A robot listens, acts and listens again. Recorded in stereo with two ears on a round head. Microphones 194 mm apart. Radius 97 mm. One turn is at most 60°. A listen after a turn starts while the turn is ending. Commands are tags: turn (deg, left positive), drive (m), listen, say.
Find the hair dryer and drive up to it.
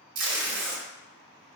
<listen/>
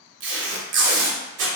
<listen/>
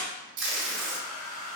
<turn deg="55"/>
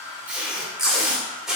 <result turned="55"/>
<turn deg="60"/>
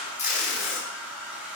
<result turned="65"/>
<drive m="1.0"/>
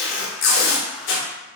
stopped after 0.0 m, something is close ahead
<listen/>
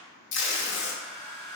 <say>Blocked. The hair dryer is further on, straight ahead.</say>